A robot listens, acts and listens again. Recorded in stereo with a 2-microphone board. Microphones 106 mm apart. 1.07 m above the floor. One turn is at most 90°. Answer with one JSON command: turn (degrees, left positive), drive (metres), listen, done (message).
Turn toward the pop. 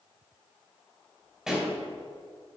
{"turn": -30}
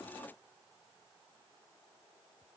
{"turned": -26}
{"listen": true}
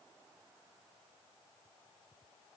{"done": "I heard a pop, but can't make it out now. It was about 20° left or 150° right."}